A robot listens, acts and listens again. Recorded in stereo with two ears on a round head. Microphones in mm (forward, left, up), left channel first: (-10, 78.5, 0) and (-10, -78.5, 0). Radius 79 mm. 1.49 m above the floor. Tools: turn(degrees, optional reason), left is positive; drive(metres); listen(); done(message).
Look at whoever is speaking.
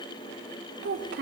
turn(degrees=-70, reason="The child speaking: about 70° right or 110° right.")
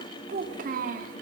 turn(degrees=-50, reason="So it is at 50° right.")
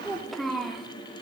done("Facing the child speaking, 2 to 4 m away.")